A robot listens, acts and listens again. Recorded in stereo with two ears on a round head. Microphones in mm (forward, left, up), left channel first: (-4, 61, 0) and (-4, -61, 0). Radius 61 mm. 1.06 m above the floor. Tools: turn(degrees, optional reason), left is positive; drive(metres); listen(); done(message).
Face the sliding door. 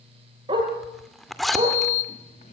turn(degrees=55, reason="The sliding door: about 55° left or 125° left.")
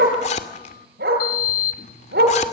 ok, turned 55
turn(degrees=70, reason="So it is at 70° left.")
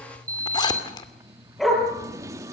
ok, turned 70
turn(degrees=-25, reason="The sliding door is now 25° right.")
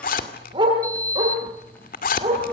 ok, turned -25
turn(degrees=15, reason="The sliding door is now 15° left.")
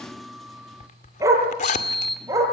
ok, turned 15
done("Found it: a sliding door, straight ahead.")